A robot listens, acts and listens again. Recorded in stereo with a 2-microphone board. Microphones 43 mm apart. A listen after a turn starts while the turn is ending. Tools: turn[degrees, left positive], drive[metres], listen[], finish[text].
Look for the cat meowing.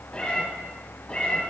Thought: The cat meowing: about 30° left or 150° left.
Action: turn[30]
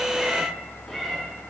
Action: finish[Facing the cat meowing.]